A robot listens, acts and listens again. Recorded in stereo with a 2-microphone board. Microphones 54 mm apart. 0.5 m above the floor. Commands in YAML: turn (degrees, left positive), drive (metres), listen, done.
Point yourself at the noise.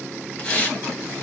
turn: 30
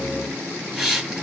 done: "Facing the hiss."